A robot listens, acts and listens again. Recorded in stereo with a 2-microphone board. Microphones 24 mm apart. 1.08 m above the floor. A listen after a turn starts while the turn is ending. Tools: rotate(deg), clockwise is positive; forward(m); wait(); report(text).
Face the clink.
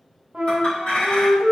rotate(-60)
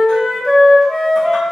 wait()
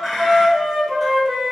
report("Facing the clink, 1 to 2 m away.")